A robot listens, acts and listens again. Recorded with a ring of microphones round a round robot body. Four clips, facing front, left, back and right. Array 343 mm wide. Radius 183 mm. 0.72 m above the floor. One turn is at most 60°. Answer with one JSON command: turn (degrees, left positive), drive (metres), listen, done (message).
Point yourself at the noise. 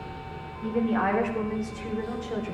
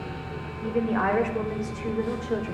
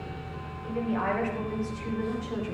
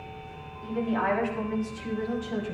{"turn": 60}
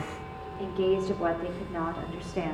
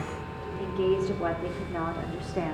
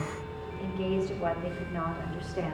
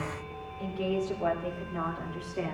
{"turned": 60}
{"turn": 45}
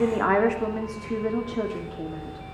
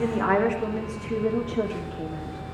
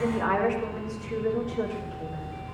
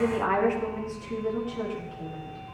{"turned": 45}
{"turn": 40}
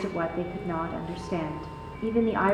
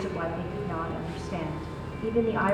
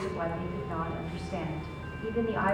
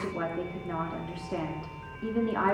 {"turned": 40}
{"done": "Facing the woman speaking, 2 to 4 m away."}